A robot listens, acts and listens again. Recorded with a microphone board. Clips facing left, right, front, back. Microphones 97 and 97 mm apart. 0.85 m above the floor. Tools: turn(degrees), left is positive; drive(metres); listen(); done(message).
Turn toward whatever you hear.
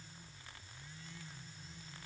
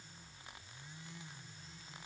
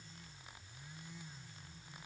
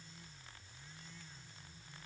listen()
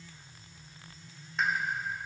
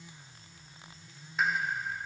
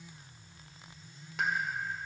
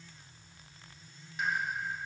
done("Facing the pop.")